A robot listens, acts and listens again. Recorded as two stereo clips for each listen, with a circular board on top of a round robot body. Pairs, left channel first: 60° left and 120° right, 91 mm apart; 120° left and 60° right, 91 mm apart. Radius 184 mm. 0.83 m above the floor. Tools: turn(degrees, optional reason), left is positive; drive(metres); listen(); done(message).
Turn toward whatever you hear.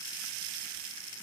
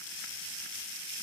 listen()
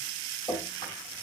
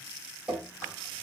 turn(degrees=20, reason="The dripping: 20° left.")
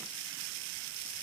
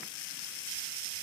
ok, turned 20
listen()
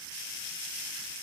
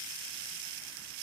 listen()
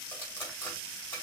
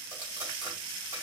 done("I heard dripping from this way, but can't make it out now.")